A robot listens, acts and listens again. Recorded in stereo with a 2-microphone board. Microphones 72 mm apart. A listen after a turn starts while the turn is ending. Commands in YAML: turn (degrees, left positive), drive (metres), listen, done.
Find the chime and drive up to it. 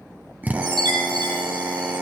turn: -70
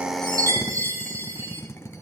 turn: -45
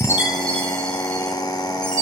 turn: 15
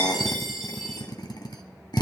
drive: 1.0
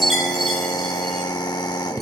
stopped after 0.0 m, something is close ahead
done: "Blocked. The chime is further on, straight ahead."